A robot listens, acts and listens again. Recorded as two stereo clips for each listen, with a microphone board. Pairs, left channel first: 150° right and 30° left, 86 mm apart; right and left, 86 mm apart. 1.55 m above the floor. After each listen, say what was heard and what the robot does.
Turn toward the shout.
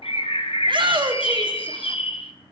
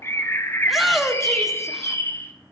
Facing the shout.